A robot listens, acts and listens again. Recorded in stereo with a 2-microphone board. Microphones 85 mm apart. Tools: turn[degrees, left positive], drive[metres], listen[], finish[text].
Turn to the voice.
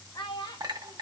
Thought: The child speaking: about 60° left or 120° left.
Action: turn[60]
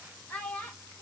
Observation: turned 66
Thought: So it is at 20° left.
Action: turn[20]
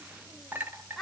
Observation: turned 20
Action: finish[Found it: a child speaking, straight ahead.]